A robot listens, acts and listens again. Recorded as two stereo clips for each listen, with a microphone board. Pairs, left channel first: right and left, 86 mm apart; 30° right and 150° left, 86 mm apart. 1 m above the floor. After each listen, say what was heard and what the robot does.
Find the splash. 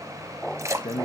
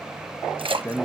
The splash: 145° left. Turn 145° left.
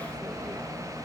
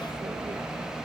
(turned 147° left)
Facing where the splash came from. I can't hear it now.